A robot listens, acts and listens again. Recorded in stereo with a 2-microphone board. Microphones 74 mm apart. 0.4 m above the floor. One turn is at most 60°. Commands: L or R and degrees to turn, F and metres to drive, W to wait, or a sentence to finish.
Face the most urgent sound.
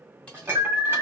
R60
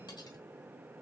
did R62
W
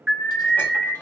R10
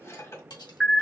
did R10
Found it: an alarm, straight ahead.